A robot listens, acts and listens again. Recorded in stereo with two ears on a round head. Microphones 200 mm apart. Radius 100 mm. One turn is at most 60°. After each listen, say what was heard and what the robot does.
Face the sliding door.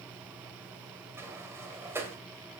Turn 30° right.
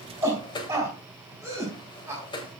So it is at 20° left. Turn 20° left.
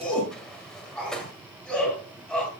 Found it: a sliding door, straight ahead, 1 to 2 m away.